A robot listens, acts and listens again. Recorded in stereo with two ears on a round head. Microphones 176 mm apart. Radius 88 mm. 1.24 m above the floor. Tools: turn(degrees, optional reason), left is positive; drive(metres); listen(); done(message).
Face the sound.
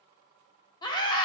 turn(degrees=20, reason="The scream: about 20° left or 160° left.")
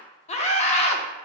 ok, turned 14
turn(degrees=145, reason="So it is at 145° left.")
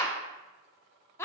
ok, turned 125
turn(degrees=15, reason="The scream is now 15° left.")
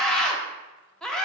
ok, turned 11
done("Facing the scream, under 1 m away.")